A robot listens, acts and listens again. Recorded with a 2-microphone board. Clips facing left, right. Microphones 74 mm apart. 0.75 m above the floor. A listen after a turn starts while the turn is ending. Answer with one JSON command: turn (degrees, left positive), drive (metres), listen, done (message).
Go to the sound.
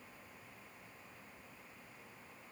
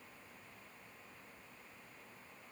{"listen": true}
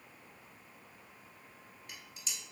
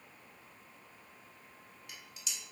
{"turn": 40}
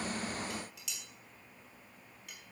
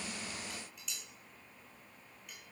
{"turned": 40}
{"turn": 95}
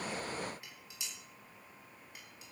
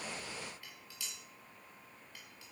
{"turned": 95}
{"turn": 20}
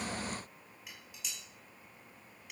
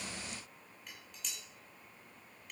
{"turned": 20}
{"drive": 1.0}
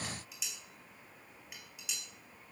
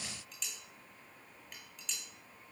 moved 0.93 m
{"drive": 1.0}
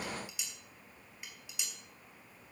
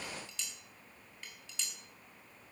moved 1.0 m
{"turn": 10}
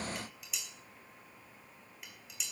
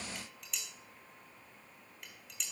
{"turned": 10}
{"drive": 1.0}
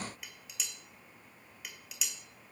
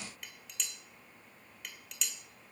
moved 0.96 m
{"drive": 1.0}
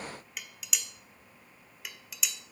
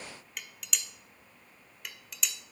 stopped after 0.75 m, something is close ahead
{"done": "Arrived at the dishes clattering, straight ahead."}